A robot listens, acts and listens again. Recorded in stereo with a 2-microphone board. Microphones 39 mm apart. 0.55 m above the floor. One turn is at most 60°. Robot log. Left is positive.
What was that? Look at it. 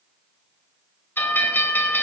note: The bell: about 55° left or 125° left.
cmd yaw +55
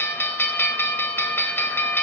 note: So it is at 65° left.
cmd yaw +60
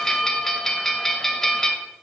note: The bell is now 10° left.
cmd yaw +10
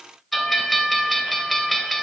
end: Found it: a bell, straight ahead, 1 to 2 m away.